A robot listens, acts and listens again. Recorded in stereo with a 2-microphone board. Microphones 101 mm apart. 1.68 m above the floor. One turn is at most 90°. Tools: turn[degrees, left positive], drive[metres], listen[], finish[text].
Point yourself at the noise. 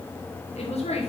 Thought: The woman speaking: about 75° left or 105° left.
Action: turn[75]
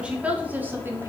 Thought: So it is at 20° right.
Action: turn[-20]
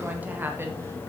Thought: The woman speaking is now 20° right.
Action: turn[-20]
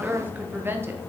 Thought: The woman speaking is now 20° right.
Action: turn[-20]
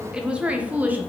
Thought: The woman speaking is now 15° right.
Action: turn[-15]
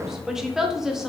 Action: finish[Facing the woman speaking.]